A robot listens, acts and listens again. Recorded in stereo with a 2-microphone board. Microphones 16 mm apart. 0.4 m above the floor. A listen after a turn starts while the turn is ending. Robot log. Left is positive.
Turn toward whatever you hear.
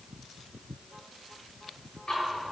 note: The ticking: about 75° left or 105° left.
cmd yaw +75
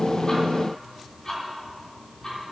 note: So it is at 15° left.
cmd yaw +15
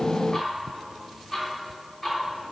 end: Facing the ticking, 2 to 4 m away.